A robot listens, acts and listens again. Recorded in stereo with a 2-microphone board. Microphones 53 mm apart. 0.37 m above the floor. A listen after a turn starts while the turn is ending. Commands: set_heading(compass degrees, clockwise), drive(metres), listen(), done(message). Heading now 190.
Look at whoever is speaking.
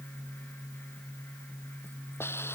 listen()
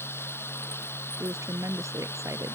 set_heading(280)
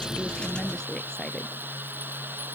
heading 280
listen()
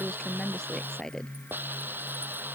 set_heading(270)
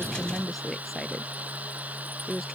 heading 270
done("Facing the woman speaking.")